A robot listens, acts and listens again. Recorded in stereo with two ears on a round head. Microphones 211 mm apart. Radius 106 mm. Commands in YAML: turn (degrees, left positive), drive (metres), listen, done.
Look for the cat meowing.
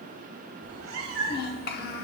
turn: -55
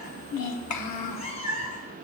turn: 35
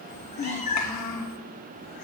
turn: 35
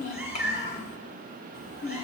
done: "Facing the cat meowing, 2 to 4 m away."